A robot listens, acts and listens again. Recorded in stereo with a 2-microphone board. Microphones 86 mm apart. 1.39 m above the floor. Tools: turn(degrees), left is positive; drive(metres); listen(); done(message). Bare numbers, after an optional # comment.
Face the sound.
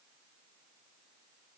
listen()
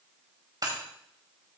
# The breaking glass: about 45° right or 135° right.
turn(-45)
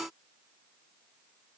listen()
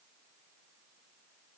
done("I heard breaking glass, but can't make it out now. It was about straight ahead or 90° right.")